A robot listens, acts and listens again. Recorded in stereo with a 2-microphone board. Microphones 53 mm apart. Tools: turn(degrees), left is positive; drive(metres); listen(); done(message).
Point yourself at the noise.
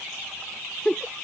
turn(degrees=30)
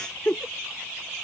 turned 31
turn(degrees=135)
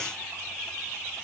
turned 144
listen()
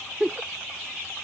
done("Found it: a giggle, straight ahead.")